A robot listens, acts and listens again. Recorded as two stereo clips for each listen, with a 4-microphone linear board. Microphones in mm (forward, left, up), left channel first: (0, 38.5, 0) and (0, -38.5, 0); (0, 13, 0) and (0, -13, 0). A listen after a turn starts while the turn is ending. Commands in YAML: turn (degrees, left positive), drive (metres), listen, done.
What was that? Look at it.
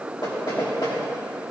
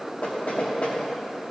turn: 70
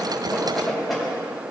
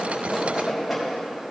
done: "Found it: knocking, straight ahead, 2 to 4 m away."